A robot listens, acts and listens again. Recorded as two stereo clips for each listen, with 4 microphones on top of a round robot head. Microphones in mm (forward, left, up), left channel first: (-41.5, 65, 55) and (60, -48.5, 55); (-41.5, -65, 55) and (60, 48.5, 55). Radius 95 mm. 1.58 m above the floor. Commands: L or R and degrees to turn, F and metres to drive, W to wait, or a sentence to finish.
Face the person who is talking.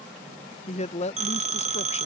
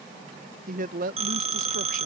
L85
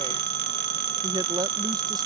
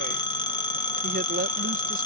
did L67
L20
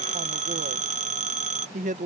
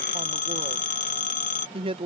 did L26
Facing the woman speaking.